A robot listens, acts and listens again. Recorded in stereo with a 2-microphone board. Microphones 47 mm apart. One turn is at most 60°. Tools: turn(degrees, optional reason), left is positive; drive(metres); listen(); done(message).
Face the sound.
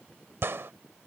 turn(degrees=-60, reason="The gunshot: about 60° right or 120° right.")
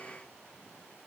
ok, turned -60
listen()
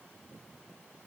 done("I heard a gunshot, but can't make it out now. It was about straight ahead or 60° right.")